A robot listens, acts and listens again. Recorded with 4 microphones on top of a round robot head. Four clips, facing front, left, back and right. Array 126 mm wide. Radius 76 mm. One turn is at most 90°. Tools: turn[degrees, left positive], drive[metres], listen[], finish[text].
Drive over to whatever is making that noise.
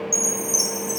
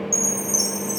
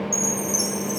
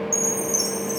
Thought: The chime: 55° left.
Action: turn[55]
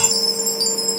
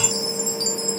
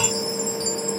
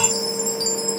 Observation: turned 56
Action: drive[1.0]
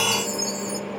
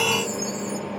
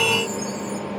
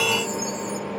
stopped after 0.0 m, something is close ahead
Action: finish[Blocked. The chime is further on, straight ahead.]